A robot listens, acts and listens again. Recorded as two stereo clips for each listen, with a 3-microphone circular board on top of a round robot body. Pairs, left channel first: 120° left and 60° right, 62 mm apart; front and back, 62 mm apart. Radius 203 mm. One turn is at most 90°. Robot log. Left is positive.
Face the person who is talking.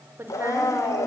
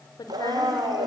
note: The woman speaking: 10° right.
cmd yaw -10
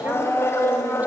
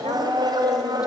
cmd idle
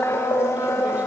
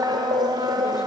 cmd idle
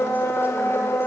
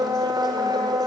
end: I heard a woman speaking from this way, but can't make it out now.